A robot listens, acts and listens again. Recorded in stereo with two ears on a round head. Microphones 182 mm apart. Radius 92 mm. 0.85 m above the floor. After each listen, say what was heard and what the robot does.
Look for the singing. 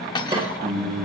The singing: about 55° right or 125° right. Turn 55° right.
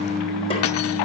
So it is at 75° right. Turn 75° right.
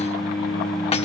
The singing is now 10° right. Turn 10° right.
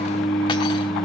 Facing the singing.